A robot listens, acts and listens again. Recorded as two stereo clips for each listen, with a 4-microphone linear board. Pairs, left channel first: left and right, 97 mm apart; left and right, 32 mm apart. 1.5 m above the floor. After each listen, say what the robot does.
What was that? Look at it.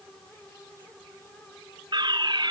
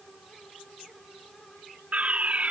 Turn 50° right.
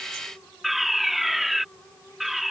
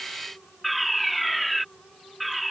Facing the fire alarm.